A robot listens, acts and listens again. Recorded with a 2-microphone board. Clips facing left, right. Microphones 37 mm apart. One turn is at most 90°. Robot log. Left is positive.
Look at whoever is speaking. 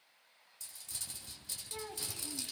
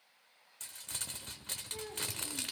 note: The child speaking: about 60° left or 120° left.
cmd yaw +60
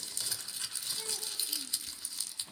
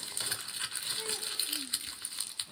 cmd idle
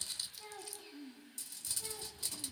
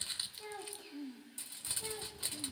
end: Found it: a child speaking, straight ahead, 2 to 4 m away.